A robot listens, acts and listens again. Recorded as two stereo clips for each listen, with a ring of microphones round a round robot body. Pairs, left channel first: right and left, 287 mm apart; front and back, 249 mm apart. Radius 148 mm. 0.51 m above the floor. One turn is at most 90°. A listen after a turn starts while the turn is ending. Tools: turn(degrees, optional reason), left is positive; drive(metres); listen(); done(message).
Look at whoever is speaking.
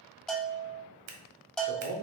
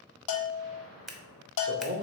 turn(degrees=90, reason="The man speaking: 145° left.")
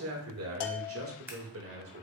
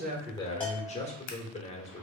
turn(degrees=60, reason="The man speaking is now 60° left.")
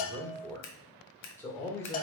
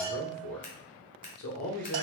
turn(degrees=-10, reason="The man speaking is now 10° right.")
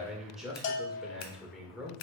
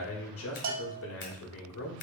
done("Found it: a man speaking, straight ahead.")